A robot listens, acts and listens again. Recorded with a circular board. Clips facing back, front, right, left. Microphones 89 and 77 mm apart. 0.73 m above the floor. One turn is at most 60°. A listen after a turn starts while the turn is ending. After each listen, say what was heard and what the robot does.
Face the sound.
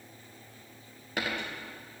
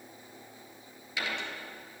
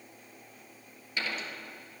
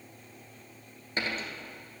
The dropped coin: 140° left. Turn 60° left.
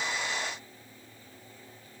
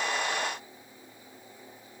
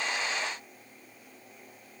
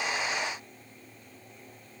Nothing new. It was at 80° left. Turn 60° left.
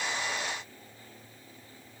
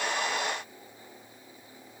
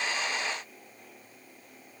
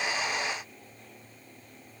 Nothing new. It was at 20° left. Turn 20° left.
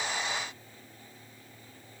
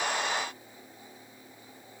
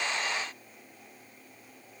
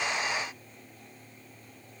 Facing where the dropped coin came from. I can't hear it now.